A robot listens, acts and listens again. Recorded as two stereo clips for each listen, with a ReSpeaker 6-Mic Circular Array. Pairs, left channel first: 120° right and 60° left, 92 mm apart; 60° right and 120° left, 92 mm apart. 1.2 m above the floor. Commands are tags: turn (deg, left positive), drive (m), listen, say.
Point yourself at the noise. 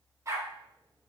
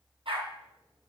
<turn deg="115"/>
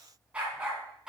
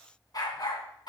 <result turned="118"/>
<turn deg="-25"/>
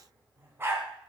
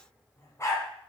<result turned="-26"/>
<say>Found it: a dog barking, straight ahead.</say>